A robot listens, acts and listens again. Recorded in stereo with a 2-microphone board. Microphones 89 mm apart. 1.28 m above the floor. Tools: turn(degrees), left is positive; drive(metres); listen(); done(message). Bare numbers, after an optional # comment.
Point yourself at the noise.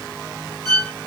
# The violin: about 30° left or 150° left.
turn(30)
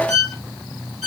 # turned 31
done("Facing the violin.")